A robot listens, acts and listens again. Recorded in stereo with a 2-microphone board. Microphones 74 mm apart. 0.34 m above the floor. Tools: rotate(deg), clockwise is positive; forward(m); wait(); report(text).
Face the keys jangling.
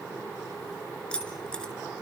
rotate(-30)
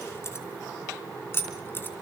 rotate(-150)
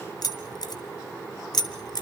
rotate(-70)
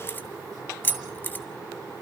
rotate(-25)
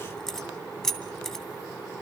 report("Found it: keys jangling, straight ahead, 2 to 4 m away.")